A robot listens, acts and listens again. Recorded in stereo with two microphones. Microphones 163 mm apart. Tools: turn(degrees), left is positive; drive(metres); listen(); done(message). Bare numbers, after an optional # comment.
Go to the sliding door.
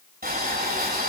listen()
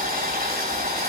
listen()
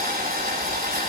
done("I can't make out a sliding door, only boiling.")